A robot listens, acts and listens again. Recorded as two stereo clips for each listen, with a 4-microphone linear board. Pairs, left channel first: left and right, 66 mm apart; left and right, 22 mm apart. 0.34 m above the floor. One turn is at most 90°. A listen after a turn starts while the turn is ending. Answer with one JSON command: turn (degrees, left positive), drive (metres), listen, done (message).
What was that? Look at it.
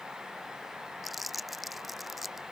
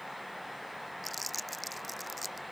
{"turn": 30}
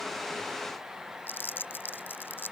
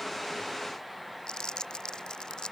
{"turn": 90}
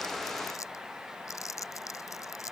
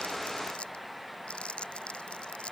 {"turn": 55}
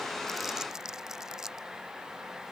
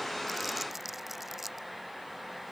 {"turn": -10}
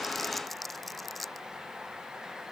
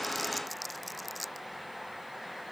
{"done": "Found it: crumpling, straight ahead."}